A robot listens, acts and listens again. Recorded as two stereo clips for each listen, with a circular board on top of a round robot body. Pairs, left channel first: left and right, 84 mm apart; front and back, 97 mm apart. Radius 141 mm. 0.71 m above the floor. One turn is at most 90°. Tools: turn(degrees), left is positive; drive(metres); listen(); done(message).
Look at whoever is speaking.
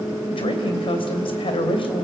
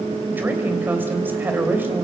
turn(degrees=90)
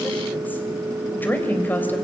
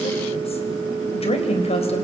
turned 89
turn(degrees=20)
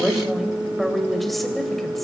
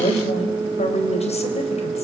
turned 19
done("Facing the woman speaking.")